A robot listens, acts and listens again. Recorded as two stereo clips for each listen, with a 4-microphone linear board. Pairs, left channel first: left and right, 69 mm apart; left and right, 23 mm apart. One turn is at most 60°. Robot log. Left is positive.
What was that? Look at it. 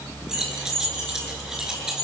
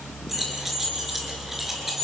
cmd yaw -30
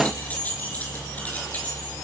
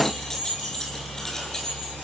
note: So it is at 25° left.
cmd yaw +25
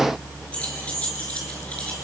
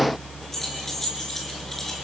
cmd idle
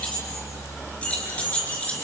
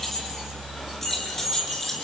note: The keys jangling is now 20° left.
cmd yaw +20
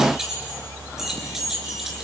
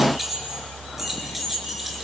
cmd idle
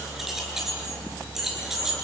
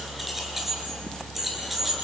end: Found it: keys jangling, straight ahead.